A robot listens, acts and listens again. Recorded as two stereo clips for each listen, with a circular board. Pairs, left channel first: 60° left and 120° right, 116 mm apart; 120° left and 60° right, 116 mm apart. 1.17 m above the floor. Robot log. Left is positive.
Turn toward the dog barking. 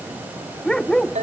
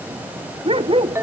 note: The dog barking: 25° right.
cmd yaw -25
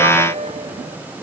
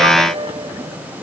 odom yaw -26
cmd idle
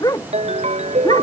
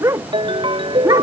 end: Facing the dog barking.